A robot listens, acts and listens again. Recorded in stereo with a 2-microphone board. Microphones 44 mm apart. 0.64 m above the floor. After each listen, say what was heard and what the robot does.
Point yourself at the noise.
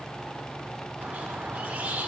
The squeak: about 35° right or 145° right. Turn 35° right.
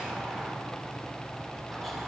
Keep listening.
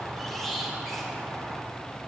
Found it: a squeak, straight ahead.